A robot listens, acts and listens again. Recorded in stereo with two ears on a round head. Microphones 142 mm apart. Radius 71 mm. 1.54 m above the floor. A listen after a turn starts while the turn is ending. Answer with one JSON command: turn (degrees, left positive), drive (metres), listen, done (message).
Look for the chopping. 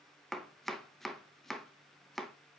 {"turn": 30}
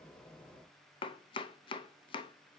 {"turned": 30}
{"turn": 145}
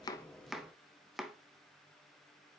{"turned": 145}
{"done": "Found it: chopping, straight ahead, under 1 m away."}